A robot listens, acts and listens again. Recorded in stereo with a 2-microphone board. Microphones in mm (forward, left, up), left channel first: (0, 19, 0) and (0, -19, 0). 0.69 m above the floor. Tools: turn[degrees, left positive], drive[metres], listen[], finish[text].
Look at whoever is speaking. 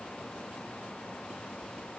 Action: listen[]
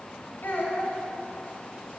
Thought: The child speaking: about 70° left or 110° left.
Action: turn[70]
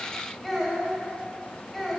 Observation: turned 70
Action: finish[Facing the child speaking.]